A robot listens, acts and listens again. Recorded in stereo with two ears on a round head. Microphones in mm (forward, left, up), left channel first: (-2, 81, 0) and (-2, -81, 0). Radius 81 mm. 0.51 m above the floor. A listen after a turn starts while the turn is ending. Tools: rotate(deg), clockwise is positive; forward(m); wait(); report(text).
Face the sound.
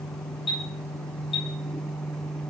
rotate(-30)
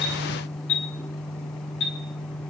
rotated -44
rotate(-105)
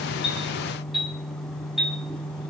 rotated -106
report("Facing the chime, 2 to 4 m away.")